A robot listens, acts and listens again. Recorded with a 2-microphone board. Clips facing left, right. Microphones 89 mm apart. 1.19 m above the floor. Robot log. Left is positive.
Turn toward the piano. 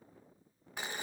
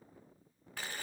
cmd idle
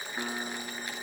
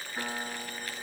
note: The piano: about 25° right or 155° right.
cmd yaw -25
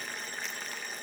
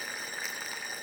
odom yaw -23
cmd idle
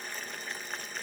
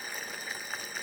cmd idle
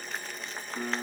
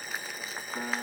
note: So it is at 130° right.
cmd yaw -130
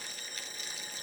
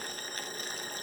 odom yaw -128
cmd idle
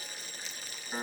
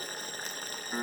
end: Facing the piano, over 4 m away.